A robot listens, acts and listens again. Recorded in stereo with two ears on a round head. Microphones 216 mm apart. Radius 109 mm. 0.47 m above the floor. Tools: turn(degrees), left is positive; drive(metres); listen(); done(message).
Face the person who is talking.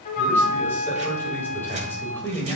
turn(degrees=30)
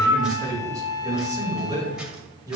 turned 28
turn(degrees=-15)
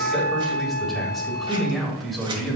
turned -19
done("Facing the man speaking, 2 to 4 m away.")